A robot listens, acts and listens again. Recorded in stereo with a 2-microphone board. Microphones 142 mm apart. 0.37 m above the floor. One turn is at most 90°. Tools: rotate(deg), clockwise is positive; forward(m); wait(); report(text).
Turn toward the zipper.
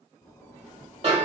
rotate(-25)
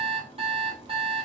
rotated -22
rotate(-90)
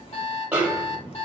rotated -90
rotate(-40)
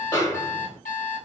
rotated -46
wait()
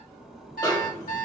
report("Facing the zipper, under 1 m away.")